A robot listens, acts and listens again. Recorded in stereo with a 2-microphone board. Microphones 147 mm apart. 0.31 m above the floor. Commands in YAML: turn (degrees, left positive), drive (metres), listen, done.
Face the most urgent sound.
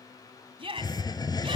turn: -40
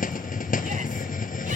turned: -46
listen: true
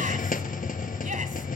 listen: true
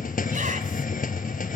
done: "I heard a shout, but can't make it out now. It was about 10° left or 95° right."